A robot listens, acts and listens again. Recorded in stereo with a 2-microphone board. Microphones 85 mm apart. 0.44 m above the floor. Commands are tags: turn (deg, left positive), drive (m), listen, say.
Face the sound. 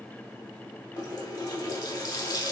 <turn deg="55"/>
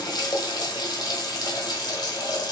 <turn deg="60"/>
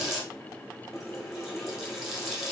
<say>Found it: a running tap, straight ahead.</say>